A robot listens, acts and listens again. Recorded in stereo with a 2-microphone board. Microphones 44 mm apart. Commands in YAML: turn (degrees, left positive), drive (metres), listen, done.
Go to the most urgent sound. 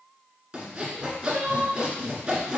turn: -60
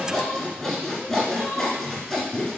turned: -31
listen: true
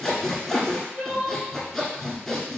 turn: -80
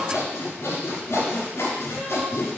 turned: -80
listen: true
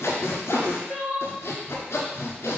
drive: 1.0
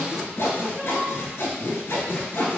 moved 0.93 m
listen: true
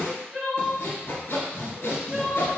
drive: 1.0
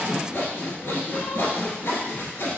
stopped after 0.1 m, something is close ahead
listen: true
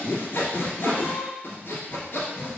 done: "Arrived at the crying, straight ahead."